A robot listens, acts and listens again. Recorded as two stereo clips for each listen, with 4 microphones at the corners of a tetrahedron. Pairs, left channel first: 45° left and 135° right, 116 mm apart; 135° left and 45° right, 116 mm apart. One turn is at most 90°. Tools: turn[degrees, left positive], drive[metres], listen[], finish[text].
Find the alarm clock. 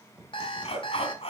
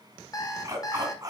Thought: The alarm clock: 80° left.
Action: turn[80]
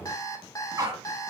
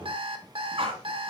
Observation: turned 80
Thought: The alarm clock is now 15° right.
Action: turn[-15]
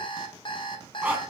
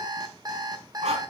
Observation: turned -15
Action: finish[Found it: an alarm clock, straight ahead, 1 to 2 m away.]